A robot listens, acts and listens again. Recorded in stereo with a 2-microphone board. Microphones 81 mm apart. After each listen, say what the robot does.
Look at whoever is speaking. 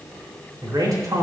Turn 50° right.
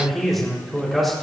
Facing the man speaking, over 4 m away.